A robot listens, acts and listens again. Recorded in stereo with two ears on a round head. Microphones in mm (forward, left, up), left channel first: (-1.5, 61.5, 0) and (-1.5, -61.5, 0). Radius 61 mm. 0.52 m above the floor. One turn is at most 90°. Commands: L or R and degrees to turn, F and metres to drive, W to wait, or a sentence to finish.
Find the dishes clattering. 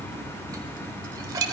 R25
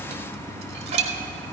R90
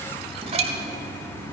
R50
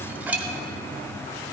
R15
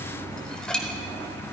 Facing the dishes clattering.